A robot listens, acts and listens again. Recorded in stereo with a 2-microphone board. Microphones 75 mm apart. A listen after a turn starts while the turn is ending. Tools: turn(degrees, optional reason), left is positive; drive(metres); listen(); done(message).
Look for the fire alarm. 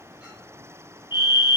turn(degrees=75, reason="The fire alarm: about 75° left or 105° left.")
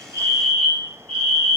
turn(degrees=15, reason="So it is at 15° left.")
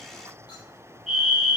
done("Found it: a fire alarm, straight ahead.")